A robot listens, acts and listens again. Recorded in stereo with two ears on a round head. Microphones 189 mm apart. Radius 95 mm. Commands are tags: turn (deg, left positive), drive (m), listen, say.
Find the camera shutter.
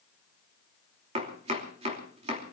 <listen/>
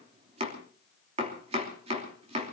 <listen/>
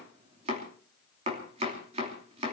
<say>I can't make out a camera shutter, only chopping.</say>